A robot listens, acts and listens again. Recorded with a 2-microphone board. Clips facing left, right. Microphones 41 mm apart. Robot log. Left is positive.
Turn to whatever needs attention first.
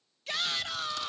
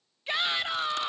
note: The shout: about 25° right or 155° right.
cmd yaw -25
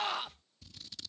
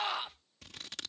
end: Facing the shout.